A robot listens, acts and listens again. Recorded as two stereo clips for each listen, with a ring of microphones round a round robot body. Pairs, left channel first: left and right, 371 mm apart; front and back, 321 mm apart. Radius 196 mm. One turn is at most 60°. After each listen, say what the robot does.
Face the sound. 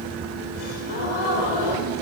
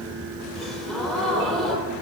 Turn 60° left.
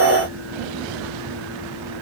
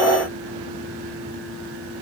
Turn 30° left.
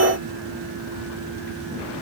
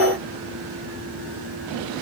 Facing where the gasp came from. I can't hear it now.